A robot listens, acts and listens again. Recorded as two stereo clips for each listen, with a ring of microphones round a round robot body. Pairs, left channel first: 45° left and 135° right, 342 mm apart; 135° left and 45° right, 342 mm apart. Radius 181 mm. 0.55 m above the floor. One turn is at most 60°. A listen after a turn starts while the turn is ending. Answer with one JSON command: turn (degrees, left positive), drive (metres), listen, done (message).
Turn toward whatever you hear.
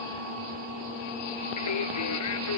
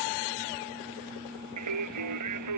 {"done": "Facing the singing."}